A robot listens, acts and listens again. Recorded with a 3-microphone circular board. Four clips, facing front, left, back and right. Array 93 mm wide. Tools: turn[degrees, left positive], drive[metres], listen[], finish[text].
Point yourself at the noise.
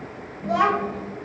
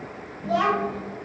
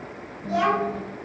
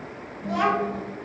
Thought: The child speaking: 10° left.
Action: turn[10]
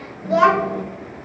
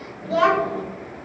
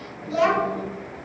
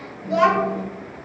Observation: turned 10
Thought: The child speaking is now 15° left.
Action: turn[15]
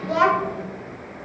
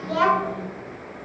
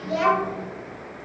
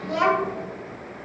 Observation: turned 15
Thought: The child speaking is now 20° left.
Action: turn[20]
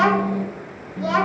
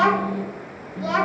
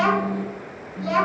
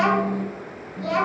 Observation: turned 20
Thought: The child speaking is now 35° left.
Action: turn[35]
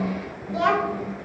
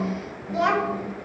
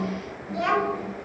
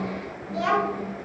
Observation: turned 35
Thought: The child speaking is now 45° left.
Action: turn[45]
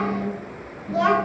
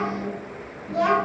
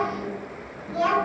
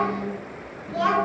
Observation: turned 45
Thought: The child speaking is now 10° right.
Action: turn[-10]
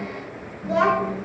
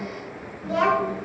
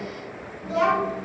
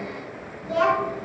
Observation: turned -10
Action: finish[Found it: a child speaking, straight ahead, 1 to 2 m away.]